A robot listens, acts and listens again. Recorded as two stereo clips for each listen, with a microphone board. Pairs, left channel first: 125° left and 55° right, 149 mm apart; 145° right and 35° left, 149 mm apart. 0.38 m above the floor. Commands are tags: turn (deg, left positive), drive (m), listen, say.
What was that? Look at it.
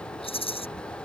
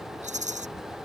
<turn deg="75"/>
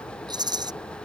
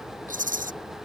<say>Facing the rattle.</say>